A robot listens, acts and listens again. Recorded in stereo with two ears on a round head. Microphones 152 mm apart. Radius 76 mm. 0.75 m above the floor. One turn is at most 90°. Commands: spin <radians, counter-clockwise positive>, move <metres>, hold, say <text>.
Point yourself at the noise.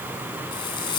spin 0.52
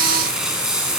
say Found it: frying, straight ahead.